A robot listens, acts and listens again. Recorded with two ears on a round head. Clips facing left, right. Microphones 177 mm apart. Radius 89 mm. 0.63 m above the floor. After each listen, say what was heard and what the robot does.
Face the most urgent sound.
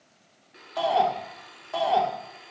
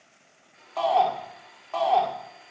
Turn 30° left.
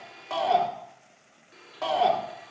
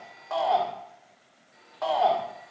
So it is at 135° left. Turn 135° left.
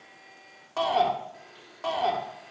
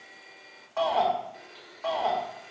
The shout is now 55° left. Turn 55° left.
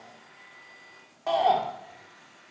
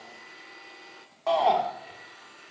Found it: a shout, straight ahead, 1 to 2 m away.